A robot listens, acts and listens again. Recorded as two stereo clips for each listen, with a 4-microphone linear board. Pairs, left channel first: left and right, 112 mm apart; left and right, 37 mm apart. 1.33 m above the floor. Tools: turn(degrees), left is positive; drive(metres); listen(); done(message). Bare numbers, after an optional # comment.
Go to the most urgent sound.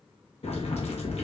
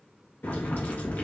listen()
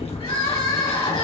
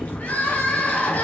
# The crying: about 60° left or 120° left.
turn(60)
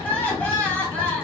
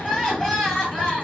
# So it is at 15° left.
turn(15)
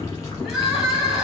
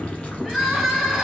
drive(1.0)
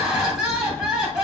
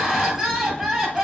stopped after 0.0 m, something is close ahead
done("Something is in my way. I am facing the crying but have not reached it.")